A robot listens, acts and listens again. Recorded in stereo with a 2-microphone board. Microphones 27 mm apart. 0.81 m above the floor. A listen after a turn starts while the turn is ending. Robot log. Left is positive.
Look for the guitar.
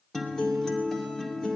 note: The guitar: about 20° left or 160° left.
cmd yaw +20
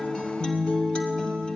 note: So it is at 140° left.
cmd yaw +140
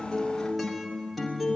end: Facing the guitar, 2 to 4 m away.